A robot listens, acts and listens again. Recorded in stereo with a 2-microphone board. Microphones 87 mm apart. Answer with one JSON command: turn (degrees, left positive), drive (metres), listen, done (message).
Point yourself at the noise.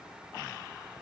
{"listen": true}
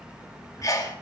{"turn": 40}
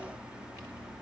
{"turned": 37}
{"listen": true}
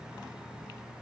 {"done": "I heard a sneeze, but can't make it out now. It was about straight ahead or 105° left."}